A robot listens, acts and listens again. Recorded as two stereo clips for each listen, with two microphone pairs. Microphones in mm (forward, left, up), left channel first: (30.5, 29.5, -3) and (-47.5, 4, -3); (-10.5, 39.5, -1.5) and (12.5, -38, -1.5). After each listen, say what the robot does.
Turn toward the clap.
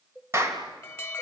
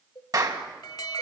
Turn 110° right.
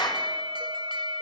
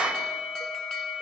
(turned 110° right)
Facing the clap.